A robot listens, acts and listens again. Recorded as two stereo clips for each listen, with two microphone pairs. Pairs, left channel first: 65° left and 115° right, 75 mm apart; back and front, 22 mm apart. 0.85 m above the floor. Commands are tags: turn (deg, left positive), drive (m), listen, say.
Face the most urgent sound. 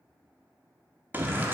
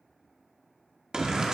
<turn deg="-50"/>
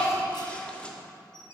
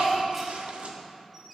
<turn deg="-10"/>
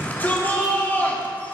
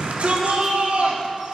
<say>Found it: a shout, straight ahead, 1 to 2 m away.</say>